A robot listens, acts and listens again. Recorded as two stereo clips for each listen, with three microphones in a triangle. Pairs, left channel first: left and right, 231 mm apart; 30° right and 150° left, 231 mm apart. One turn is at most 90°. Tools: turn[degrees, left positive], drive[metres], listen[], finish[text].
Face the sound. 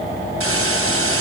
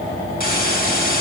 Thought: The hiss: 80° right.
Action: turn[-80]
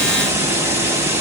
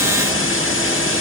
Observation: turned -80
Thought: The hiss is now 10° right.
Action: turn[-10]
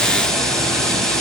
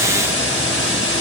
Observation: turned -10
Action: finish[Facing the hiss.]